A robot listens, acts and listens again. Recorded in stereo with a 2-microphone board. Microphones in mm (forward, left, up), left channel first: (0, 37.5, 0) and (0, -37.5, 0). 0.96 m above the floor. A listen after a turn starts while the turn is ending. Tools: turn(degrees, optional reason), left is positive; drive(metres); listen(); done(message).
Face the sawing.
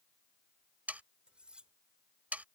turn(degrees=-20, reason="The sawing: about 20° right or 160° right.")
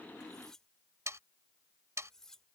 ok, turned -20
turn(degrees=-140, reason="So it is at 140° right.")
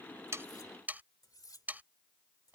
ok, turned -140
turn(degrees=-25, reason="The sawing is now 25° right.")
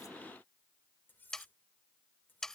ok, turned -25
done("Facing the sawing.")